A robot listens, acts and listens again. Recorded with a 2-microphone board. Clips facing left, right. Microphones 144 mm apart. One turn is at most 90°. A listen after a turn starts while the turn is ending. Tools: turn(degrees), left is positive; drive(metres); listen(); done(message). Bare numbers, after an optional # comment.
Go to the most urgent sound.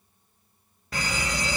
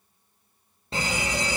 # The fire alarm: about 25° right or 155° right.
turn(-25)
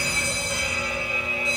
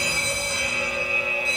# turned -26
drive(1.0)
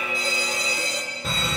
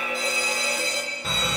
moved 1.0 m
drive(1.0)
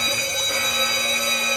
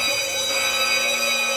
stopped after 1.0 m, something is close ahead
done("I am next to the fire alarm.")